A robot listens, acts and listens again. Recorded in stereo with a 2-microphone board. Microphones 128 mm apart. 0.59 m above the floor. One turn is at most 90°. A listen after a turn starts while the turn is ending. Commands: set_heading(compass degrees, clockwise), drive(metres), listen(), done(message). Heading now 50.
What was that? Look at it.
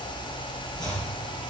set_heading(20)
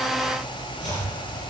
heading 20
set_heading(290)
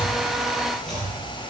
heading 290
done("Found it: chopping, straight ahead, over 4 m away.")